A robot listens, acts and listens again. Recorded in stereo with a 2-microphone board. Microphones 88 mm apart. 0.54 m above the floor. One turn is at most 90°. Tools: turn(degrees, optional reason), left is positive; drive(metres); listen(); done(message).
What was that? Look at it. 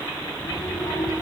turn(degrees=90)
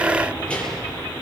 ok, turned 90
turn(degrees=15, reason="So it is at 15° left.")
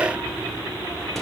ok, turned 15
listen()
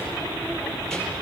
done("Facing the child speaking.")